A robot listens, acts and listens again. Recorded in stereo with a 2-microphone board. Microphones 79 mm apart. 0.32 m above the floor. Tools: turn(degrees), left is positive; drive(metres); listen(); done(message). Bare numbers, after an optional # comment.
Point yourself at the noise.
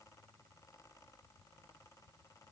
listen()
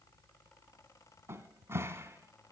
# The cupboard door: about 35° right or 145° right.
turn(-35)
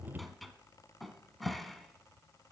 done("Facing the cupboard door.")